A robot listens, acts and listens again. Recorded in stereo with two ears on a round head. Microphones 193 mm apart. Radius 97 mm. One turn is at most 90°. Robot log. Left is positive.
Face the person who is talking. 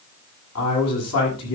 cmd yaw +90
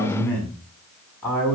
note: So it is at 10° left.
cmd yaw +10
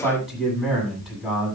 end: Found it: a man speaking, straight ahead, over 4 m away.